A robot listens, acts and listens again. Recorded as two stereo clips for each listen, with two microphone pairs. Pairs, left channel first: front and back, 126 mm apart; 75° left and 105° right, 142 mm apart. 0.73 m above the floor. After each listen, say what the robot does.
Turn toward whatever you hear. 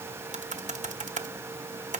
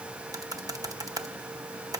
Turn 170° right.
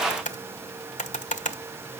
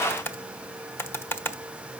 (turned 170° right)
Facing the typing on a keyboard.